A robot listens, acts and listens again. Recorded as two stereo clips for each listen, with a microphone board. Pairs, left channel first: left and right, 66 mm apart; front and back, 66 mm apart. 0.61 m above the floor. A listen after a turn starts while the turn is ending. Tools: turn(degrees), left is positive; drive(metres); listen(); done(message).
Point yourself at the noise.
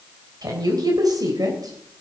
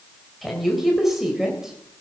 turn(degrees=-95)
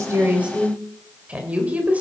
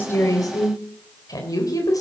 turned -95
turn(degrees=-25)
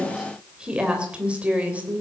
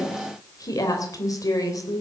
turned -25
turn(degrees=-25)
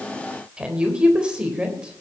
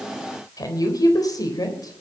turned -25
turn(degrees=-15)
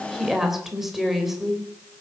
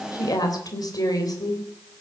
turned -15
done("Facing the woman speaking, 2 to 4 m away.")